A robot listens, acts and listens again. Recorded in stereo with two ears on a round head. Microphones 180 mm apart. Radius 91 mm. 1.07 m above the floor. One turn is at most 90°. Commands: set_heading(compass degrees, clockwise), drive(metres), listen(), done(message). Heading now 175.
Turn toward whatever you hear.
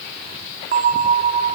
set_heading(215)
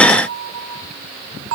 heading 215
set_heading(305)
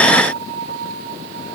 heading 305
set_heading(355)
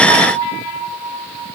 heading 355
set_heading(15)
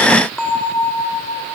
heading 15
done("Found it: a bell, straight ahead, 2 to 4 m away.")